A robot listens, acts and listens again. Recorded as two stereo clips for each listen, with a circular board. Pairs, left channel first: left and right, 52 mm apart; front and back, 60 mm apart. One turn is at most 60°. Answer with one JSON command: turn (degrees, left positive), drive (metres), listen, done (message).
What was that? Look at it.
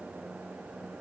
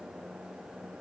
{"listen": true}
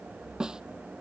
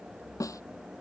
{"turn": -15}
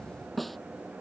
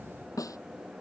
{"done": "Found it: a snare drum, straight ahead."}